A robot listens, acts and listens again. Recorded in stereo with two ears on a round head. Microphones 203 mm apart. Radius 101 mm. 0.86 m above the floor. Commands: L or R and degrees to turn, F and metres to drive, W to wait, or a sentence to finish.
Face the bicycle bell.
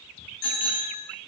L90
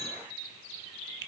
W
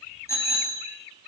L15
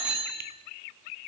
Found it: a bicycle bell, straight ahead.